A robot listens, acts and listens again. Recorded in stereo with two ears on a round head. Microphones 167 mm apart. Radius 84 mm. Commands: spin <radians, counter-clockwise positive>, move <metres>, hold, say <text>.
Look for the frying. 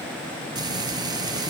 spin -0.44
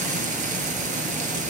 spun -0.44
spin -2.36
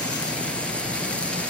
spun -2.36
say Facing the frying, 2 to 4 m away.